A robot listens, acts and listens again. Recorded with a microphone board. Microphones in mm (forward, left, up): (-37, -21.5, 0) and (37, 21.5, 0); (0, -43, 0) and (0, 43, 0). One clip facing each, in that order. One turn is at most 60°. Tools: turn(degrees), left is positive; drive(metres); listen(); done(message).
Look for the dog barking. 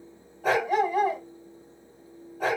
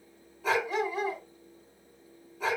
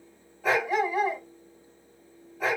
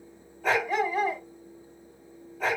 turn(degrees=-60)
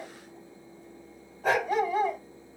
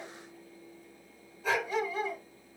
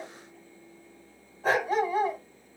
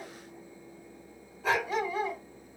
turn(degrees=-60)
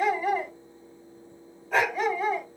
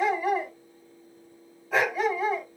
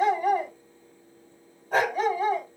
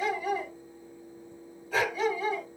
turn(degrees=-55)
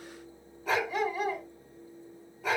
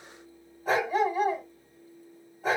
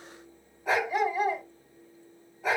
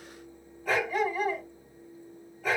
turn(degrees=-15)
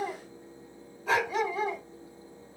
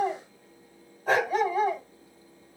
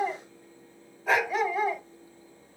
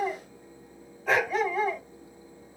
done("Facing the dog barking.")